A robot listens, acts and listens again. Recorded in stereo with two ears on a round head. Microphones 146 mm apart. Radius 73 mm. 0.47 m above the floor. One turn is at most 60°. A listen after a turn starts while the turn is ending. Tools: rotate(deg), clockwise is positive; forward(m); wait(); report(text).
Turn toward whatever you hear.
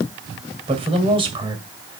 rotate(30)
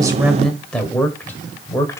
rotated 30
rotate(-15)
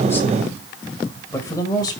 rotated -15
rotate(-25)
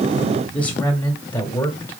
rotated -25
rotate(-15)
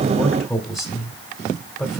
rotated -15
report("Facing the man speaking, 2 to 4 m away.")